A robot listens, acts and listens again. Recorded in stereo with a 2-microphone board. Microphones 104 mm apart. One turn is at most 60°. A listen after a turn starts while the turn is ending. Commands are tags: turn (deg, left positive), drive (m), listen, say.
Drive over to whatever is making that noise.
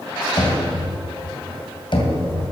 <turn deg="55"/>
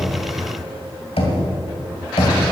<turn deg="60"/>
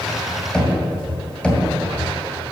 <turn deg="10"/>
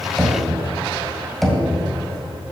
<drive m="1.0"/>
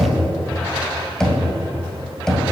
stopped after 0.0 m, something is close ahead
<say>Blocked. The knocking is further on, straight ahead.</say>